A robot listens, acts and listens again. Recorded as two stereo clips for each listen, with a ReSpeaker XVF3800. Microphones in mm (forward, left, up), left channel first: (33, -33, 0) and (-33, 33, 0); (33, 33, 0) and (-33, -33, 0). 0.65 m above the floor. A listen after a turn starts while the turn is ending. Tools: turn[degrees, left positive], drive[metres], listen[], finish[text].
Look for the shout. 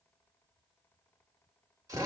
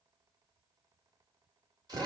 Action: listen[]
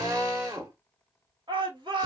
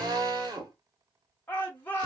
Thought: The shout: 115° left.
Action: turn[115]
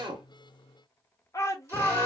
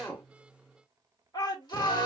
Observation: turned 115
Action: finish[Facing the shout.]